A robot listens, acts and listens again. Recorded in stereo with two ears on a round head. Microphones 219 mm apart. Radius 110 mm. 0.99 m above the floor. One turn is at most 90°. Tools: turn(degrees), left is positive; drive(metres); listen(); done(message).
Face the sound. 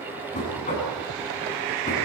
turn(degrees=30)
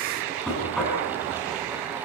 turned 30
done("Facing the knocking.")